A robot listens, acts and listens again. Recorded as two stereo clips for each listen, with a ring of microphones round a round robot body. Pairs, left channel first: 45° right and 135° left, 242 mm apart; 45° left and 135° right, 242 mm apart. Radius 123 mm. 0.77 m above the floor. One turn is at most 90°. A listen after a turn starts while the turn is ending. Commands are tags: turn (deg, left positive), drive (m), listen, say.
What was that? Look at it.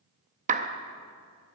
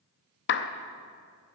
<turn deg="80"/>
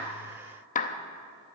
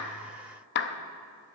<turn deg="10"/>
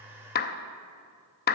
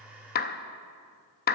<say>Found it: a clap, straight ahead, under 1 m away.</say>